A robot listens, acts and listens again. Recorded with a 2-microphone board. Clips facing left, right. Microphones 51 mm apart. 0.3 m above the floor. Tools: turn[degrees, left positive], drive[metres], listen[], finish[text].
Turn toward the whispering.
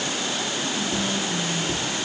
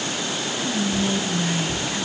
Thought: The whispering: about 30° right or 150° right.
Action: turn[-30]
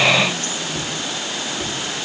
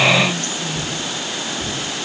Action: listen[]
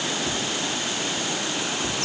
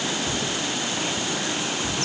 Action: listen[]
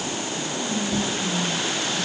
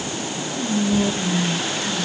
Thought: So it is at 115° right.
Action: turn[-115]
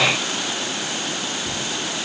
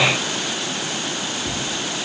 Action: listen[]
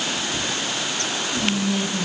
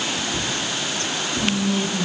Action: finish[Facing the whispering.]